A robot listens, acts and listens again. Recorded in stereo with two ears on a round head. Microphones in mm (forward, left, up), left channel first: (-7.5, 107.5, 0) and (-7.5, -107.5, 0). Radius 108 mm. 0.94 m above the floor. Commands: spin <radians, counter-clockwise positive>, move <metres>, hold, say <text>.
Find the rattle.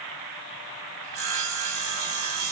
hold
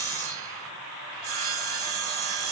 hold
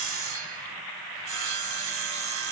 say I can't make out a rattle, only sawing.